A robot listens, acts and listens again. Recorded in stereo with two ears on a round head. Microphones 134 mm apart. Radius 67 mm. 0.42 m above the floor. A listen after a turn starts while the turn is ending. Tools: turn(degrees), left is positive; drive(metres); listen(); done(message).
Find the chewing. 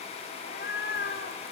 listen()
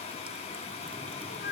listen()
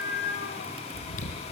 turn(degrees=55)
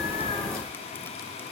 listen()
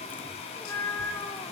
listen()
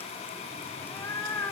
done("I heard chewing, but can't make it out now. It was about straight ahead or 70° left.")